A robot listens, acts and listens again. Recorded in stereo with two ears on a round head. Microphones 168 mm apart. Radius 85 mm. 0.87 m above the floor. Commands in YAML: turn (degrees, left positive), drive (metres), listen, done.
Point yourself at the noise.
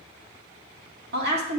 turn: -60
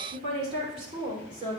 turn: -25
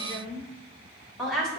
done: "Found it: a woman speaking, straight ahead."